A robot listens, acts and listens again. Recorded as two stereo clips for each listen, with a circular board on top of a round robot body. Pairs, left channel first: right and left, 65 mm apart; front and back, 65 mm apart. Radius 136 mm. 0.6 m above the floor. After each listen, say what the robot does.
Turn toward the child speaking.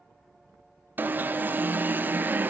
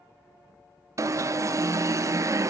Keep listening.
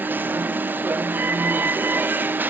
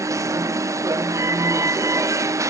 Keep listening.
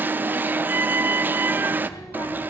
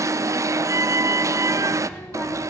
Turn 65° right.
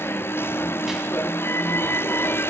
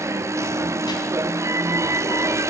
Keep listening.
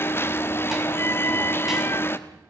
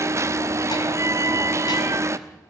Keep listening.
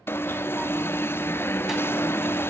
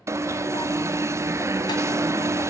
I heard a child speaking from this way, but can't make it out now.